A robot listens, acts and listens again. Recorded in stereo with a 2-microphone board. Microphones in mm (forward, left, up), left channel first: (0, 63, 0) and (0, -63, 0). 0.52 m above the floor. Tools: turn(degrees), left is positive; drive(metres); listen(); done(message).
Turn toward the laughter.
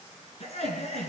turn(degrees=60)
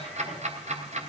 listen()
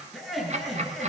done("Facing the laughter, over 4 m away.")